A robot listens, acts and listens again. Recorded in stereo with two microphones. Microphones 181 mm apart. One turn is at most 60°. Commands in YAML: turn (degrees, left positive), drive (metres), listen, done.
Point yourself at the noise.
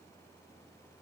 listen: true
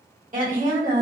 turn: -45
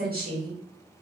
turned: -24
turn: -60
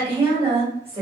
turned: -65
turn: -35
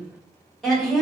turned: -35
done: "Found it: a woman speaking, straight ahead, 1 to 2 m away."